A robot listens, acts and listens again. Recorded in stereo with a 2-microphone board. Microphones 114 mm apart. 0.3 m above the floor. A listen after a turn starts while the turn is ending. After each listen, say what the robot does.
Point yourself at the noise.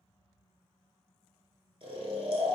Turn 55° right.
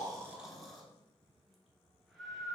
Found it: snoring, straight ahead.